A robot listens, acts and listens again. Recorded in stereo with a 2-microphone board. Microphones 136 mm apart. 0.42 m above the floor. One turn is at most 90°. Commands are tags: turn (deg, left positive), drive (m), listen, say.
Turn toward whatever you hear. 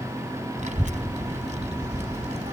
<turn deg="-55"/>
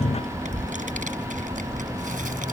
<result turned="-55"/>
<turn deg="-80"/>
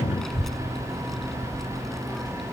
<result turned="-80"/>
<say>Facing the child speaking.</say>